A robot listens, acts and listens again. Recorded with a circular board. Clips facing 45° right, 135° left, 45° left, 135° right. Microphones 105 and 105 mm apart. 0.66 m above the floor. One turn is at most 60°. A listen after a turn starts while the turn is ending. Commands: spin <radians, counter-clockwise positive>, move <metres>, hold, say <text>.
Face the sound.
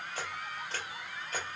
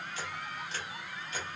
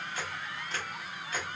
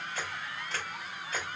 spin -0.79
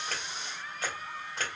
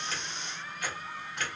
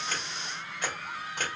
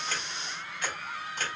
spin 0.17
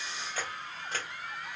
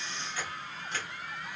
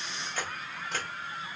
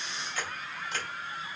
say Facing the camera shutter.